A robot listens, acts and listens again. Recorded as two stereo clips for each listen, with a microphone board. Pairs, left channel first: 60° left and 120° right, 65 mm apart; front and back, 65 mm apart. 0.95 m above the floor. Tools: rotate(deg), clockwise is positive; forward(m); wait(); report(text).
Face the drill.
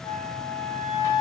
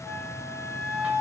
wait()
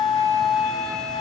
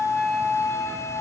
wait()
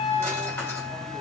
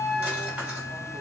report("I can't make out a drill to turn to.")